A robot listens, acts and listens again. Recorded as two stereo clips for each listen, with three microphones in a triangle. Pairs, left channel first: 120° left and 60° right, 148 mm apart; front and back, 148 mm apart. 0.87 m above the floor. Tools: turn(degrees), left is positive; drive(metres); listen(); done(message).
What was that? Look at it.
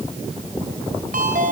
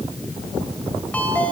turn(degrees=-80)
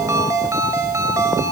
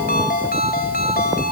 turn(degrees=10)
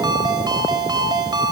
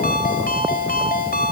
done("Found it: a ringtone, straight ahead.")